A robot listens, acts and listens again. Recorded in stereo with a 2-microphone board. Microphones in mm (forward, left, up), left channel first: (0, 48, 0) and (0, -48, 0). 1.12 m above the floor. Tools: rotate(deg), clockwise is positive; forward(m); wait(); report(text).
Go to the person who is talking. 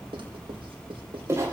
wait()
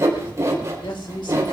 rotate(-60)
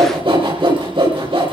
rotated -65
wait()
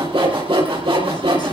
wait()
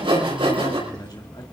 rotate(-55)
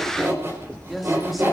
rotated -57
forward(1.0)
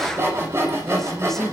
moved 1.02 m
forward(1.0)
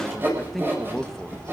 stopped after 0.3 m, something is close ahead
report("Arrived at the man speaking, straight ahead.")